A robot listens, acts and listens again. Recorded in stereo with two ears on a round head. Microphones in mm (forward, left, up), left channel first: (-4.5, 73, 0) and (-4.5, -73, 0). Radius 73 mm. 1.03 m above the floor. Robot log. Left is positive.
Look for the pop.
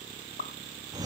note: The pop: about 55° left or 125° left.
cmd yaw +55
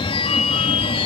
cmd idle
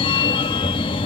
end: I heard a pop, but can't make it out now. It was about straight ahead or 70° left.